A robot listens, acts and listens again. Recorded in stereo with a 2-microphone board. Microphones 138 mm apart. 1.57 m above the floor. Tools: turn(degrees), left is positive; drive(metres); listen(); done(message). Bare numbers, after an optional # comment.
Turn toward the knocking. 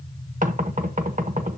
# The knocking: about 70° right or 110° right.
turn(-70)
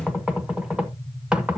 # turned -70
done("Facing the knocking, 1 to 2 m away.")